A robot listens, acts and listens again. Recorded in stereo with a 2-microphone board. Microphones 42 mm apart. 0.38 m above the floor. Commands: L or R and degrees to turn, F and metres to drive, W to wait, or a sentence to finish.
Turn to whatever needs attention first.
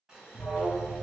L35
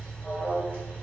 L10
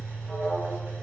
Found it: an alarm, straight ahead, 1 to 2 m away.